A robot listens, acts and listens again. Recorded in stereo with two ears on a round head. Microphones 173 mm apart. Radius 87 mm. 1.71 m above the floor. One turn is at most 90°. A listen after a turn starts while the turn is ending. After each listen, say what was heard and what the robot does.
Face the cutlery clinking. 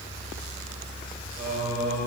Keep listening.
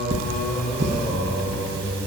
The cutlery clinking: about 50° right or 130° right. Turn 50° right.
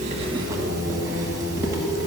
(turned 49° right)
Keep listening.
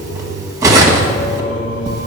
So it is at 20° right. Turn 20° right.
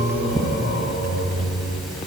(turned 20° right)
Found it: cutlery clinking, straight ahead, 1 to 2 m away.